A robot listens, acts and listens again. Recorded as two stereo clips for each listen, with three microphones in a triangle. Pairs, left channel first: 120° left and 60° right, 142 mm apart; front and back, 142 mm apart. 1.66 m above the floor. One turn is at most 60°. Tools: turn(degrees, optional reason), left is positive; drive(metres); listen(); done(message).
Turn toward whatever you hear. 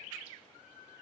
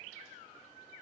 listen()
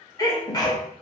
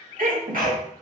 turn(degrees=-60, reason="The sneeze: 175° right.")
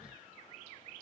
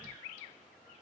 turn(degrees=-60, reason="Nothing new. It was at 115° right.")
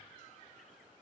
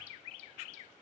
turn(degrees=-55, reason="Nothing new. It was at 55° right.")
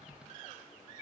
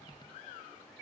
done("Facing where the sneeze came from. I can't hear it now.")